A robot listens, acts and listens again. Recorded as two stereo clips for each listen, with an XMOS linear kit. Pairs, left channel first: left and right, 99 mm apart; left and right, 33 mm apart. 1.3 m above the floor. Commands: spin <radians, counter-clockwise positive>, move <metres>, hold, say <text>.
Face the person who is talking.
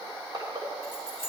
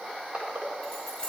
hold
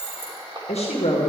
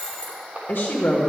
spin 1.57
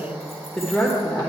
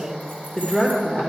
spin 0.17
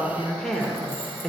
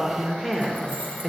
say Facing the woman speaking.